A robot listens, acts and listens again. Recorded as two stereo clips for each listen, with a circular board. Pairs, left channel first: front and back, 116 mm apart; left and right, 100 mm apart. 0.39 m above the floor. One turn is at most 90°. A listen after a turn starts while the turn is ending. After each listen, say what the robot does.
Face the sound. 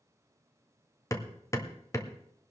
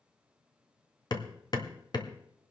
Turn 60° left.
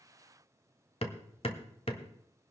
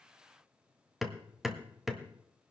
Found it: hammering, straight ahead, 1 to 2 m away.